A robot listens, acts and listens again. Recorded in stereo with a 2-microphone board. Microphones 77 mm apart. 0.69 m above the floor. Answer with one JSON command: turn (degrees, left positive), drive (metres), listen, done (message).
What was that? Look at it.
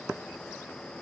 {"listen": true}
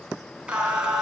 {"turn": -30}
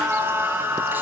{"turn": -150}
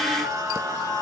{"turn": -55}
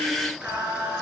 {"turn": -15}
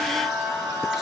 {"done": "Facing the singing, over 4 m away."}